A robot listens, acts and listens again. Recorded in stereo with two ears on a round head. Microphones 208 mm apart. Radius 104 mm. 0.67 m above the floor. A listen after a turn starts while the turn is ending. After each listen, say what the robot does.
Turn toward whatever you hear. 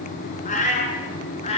Turn 30° left.
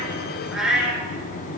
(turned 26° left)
Found it: a cat meowing, straight ahead, 2 to 4 m away.